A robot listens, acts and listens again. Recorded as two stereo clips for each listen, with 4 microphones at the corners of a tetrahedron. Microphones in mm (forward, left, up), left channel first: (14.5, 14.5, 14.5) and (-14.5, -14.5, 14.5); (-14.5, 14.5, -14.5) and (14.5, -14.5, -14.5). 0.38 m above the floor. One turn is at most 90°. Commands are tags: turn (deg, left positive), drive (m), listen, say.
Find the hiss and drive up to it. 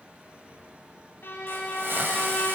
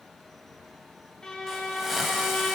<turn deg="-90"/>
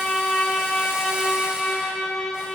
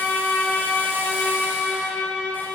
<turn deg="-40"/>
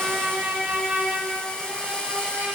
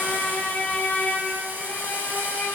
<turn deg="-15"/>
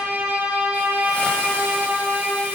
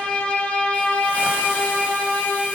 <listen/>
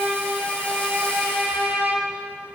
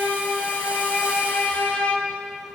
<listen/>
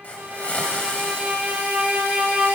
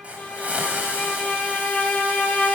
<drive m="1.0"/>
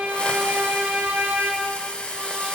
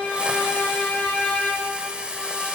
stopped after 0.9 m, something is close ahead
<say>Arrived at the hiss, straight ahead.</say>